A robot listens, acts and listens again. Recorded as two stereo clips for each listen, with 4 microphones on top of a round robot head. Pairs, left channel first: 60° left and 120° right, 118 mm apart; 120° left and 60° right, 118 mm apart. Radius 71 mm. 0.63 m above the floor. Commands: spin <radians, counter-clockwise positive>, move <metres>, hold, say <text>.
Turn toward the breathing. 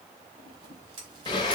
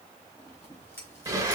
hold
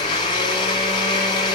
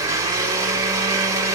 hold
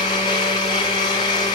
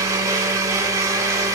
say I can't make out breathing to turn to.